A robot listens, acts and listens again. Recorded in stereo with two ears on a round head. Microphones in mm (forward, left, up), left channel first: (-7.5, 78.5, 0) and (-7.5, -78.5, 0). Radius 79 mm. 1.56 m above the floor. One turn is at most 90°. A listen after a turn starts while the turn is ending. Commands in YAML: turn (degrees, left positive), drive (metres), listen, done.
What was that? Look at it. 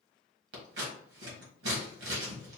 turn: -70
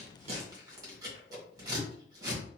turn: -25
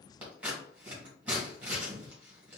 turn: -10
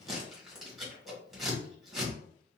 done: "Found it: scissors, straight ahead, 1 to 2 m away."